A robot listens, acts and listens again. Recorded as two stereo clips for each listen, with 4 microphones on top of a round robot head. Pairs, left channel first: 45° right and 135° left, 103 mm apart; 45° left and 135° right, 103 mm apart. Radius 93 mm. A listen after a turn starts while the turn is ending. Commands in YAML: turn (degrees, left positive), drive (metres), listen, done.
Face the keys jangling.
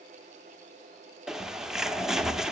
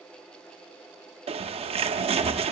listen: true
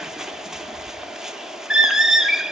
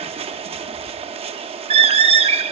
listen: true
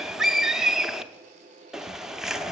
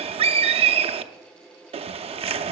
done: "I can't make out keys jangling to turn to."